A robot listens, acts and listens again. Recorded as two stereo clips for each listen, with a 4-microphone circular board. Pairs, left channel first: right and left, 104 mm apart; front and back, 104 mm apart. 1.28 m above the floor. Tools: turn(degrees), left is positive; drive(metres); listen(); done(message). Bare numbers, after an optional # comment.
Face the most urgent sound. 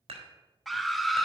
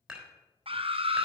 # The scream: straight behind.
turn(180)
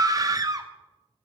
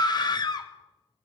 # The scream is now 40° left.
turn(40)
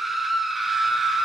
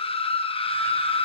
done("Found it: a scream, straight ahead, 1 to 2 m away.")